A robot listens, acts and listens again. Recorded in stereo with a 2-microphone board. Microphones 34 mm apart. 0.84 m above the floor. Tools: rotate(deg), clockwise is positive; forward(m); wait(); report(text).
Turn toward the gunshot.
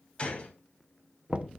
rotate(-30)
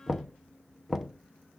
wait()
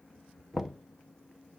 report("I heard a gunshot, but can't make it out now. It was about straight ahead or 120° left.")